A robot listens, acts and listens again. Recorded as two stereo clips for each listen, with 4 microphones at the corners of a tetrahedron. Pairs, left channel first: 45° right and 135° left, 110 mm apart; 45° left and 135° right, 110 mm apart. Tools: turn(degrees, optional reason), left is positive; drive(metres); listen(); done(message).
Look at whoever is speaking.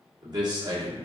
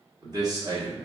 turn(degrees=-175, reason="The man speaking: 175° right.")
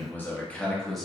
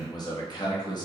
turn(degrees=45, reason="The man speaking is now 45° left.")
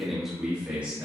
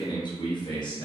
turn(degrees=70, reason="The man speaking is now 70° left.")
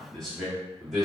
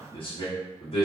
turn(degrees=50, reason="The man speaking is now 50° left.")
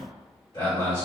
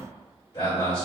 done("Facing the man speaking, 1 to 2 m away.")